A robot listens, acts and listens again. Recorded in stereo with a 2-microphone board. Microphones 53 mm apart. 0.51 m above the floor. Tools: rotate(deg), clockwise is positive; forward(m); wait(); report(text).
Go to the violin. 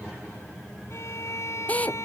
rotate(-65)
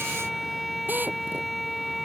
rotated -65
forward(1.0)
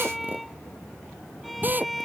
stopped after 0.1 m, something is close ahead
report("Something is in my way. I am facing the violin but have not reached it.")